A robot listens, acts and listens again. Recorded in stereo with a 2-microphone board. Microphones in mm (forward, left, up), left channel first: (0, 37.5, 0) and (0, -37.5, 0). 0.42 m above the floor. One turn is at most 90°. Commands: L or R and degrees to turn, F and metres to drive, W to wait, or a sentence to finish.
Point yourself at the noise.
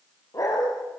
L50
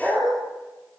Facing the dog barking.